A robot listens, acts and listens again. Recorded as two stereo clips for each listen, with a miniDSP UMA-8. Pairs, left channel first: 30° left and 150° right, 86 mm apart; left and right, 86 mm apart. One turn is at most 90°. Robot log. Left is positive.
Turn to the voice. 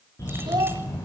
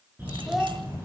note: The child speaking: 175° right.
cmd yaw -90
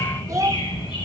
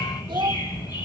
note: The child speaking is now 105° right.
cmd yaw -90
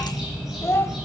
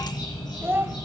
note: The child speaking is now 25° right.
cmd yaw -25
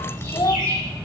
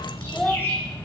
end: Found it: a child speaking, straight ahead.